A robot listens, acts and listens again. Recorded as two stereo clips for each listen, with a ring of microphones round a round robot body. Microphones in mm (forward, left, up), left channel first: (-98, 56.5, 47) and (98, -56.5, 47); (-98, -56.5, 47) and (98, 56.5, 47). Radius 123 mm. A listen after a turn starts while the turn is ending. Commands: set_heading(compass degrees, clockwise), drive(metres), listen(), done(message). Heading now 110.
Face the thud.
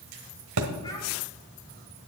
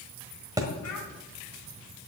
set_heading(155)
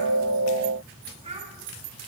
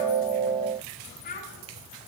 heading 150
done("Facing where the thud came from. I can't hear it now.")